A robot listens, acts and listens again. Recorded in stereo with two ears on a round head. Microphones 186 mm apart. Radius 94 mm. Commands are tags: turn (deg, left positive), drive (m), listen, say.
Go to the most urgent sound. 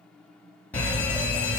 <turn deg="30"/>
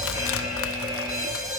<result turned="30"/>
<turn deg="-20"/>
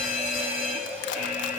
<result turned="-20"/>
<turn deg="-10"/>
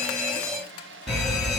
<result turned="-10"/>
<drive m="1.0"/>
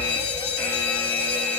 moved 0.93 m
<turn deg="10"/>
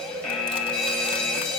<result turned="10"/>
<drive m="1.0"/>
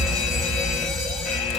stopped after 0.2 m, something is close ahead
<say>Arrived at the fire alarm, straight ahead.</say>